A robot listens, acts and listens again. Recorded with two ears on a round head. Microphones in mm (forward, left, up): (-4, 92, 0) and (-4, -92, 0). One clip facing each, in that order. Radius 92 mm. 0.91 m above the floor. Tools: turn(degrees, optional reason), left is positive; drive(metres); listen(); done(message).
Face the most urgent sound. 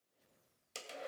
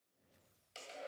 listen()
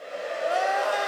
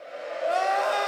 turn(degrees=30)
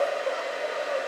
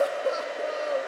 listen()
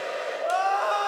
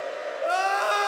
turn(degrees=-25, reason="So it is at 25° right.")
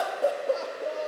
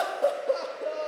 done("Found it: crying, straight ahead.")